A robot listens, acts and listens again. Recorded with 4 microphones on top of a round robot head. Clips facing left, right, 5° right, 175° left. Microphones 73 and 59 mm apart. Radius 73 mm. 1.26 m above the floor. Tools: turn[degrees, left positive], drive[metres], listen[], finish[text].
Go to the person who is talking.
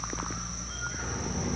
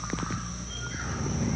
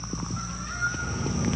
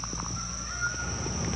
Thought: The child speaking: 80° left.
Action: turn[80]
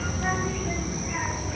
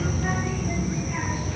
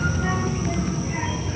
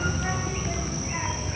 Thought: The child speaking is now 10° left.
Action: turn[10]
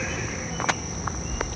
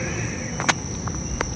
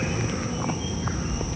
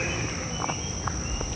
Action: drive[1.0]
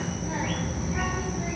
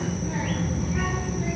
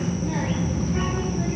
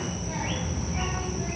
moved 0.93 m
Thought: The child speaking is now 10° left.
Action: turn[10]
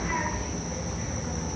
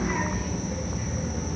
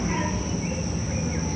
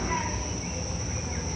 Action: drive[1.0]
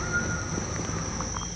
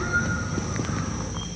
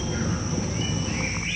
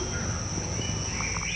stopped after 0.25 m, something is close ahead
Action: finish[Arrived at the child speaking, straight ahead.]